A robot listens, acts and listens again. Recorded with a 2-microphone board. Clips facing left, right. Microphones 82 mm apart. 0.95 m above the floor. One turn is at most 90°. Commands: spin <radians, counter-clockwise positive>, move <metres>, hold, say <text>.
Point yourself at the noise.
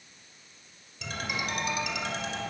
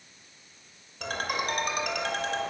spin -0.96
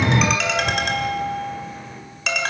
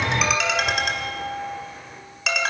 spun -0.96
say Facing the ringtone, 2 to 4 m away.